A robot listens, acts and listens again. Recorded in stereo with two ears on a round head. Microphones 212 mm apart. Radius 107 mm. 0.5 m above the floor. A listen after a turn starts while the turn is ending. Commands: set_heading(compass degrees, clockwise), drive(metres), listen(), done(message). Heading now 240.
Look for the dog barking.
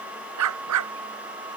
set_heading(330)
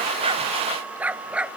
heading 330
done("Facing the dog barking.")